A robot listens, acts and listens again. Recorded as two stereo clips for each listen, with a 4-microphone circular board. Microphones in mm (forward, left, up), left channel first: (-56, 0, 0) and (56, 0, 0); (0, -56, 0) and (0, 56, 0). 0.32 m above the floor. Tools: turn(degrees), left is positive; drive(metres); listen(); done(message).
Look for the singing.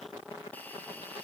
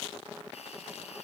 listen()
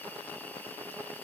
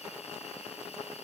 listen()
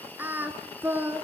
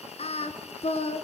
turn(degrees=-70)
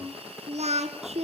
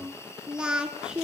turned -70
done("Found it: singing, straight ahead.")